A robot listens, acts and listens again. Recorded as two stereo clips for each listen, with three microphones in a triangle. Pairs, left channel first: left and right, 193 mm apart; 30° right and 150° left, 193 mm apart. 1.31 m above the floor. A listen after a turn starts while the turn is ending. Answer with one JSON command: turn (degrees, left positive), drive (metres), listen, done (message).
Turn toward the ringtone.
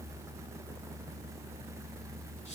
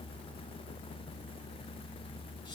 {"listen": true}
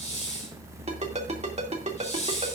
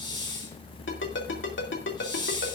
{"turn": -35}
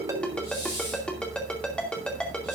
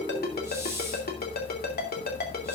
{"done": "Found it: a ringtone, straight ahead."}